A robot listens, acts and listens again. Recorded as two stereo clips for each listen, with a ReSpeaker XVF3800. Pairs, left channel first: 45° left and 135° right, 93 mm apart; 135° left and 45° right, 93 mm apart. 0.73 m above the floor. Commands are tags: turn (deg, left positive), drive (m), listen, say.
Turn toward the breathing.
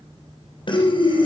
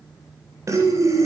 <turn deg="15"/>
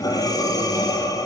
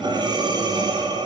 <say>Found it: breathing, straight ahead, 2 to 4 m away.</say>